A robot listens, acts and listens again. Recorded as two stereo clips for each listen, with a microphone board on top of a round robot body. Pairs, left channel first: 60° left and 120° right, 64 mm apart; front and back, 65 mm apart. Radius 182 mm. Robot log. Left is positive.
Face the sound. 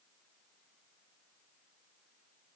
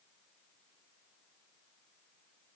cmd idle
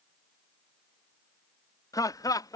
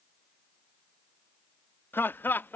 note: The laughter: 60° left.
cmd yaw +60
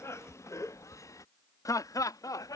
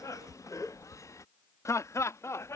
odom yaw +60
note: The laughter is now 40° left.
cmd yaw +40
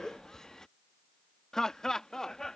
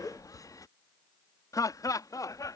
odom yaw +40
note: The laughter is now 20° right.
cmd yaw -20
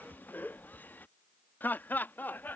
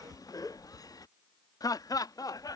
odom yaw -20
end: Facing the laughter.